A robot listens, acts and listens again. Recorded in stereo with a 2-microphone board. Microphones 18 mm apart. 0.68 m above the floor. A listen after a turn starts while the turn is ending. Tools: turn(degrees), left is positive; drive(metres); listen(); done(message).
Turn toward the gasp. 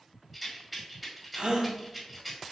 turn(degrees=-65)
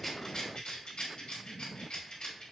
listen()
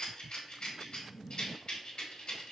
done("I heard a gasp, but can't make it out now. It was about straight ahead or 50° right.")